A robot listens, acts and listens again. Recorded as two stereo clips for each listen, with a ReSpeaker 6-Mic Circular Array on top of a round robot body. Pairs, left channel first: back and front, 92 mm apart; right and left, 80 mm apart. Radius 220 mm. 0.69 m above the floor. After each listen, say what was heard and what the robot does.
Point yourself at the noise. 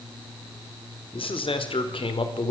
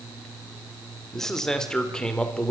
The man speaking: 165° right. Turn 165° right.
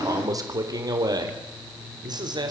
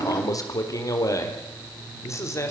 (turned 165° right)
The man speaking is now 35° right. Turn 35° right.
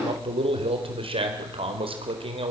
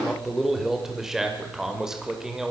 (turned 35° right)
Found it: a man speaking, straight ahead.